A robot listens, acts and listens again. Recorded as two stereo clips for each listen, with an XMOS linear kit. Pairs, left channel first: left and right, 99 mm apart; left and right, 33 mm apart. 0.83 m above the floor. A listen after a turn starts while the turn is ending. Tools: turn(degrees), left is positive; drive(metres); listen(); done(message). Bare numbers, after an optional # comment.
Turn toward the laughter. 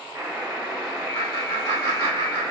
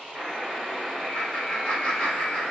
# The laughter: about 35° left or 145° left.
turn(35)
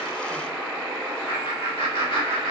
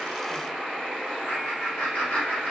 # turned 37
# So it is at 100° left.
turn(100)
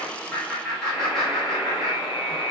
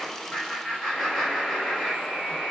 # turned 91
done("Facing the laughter, 1 to 2 m away.")